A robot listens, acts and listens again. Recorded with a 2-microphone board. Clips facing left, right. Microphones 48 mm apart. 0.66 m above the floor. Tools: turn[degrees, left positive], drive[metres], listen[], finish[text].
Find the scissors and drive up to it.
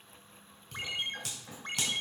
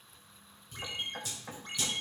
Action: turn[90]
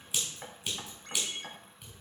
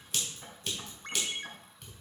Thought: So it is at 10° left.
Action: turn[10]
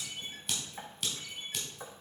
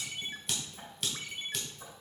Action: drive[1.0]
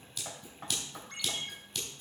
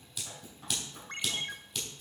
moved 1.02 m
Action: drive[1.0]
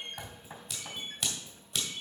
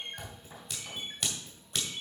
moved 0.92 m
Action: drive[1.0]
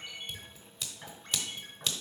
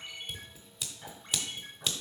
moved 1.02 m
Action: drive[1.0]
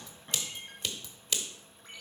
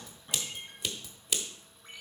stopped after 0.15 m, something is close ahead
Action: finish[I am next to the scissors.]